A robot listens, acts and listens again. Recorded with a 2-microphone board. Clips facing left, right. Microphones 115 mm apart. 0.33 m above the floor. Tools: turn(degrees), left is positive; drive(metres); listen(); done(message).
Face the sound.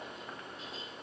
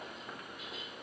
listen()
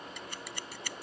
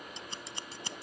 turn(degrees=-25)
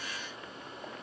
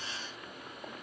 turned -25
listen()
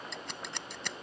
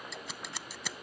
done("Found it: scissors, straight ahead.")